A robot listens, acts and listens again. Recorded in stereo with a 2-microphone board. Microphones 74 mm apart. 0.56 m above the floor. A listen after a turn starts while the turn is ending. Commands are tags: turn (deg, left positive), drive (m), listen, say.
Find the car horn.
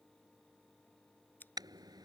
<turn deg="-75"/>
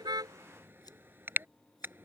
<turn deg="-30"/>
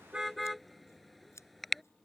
<say>Facing the car horn.</say>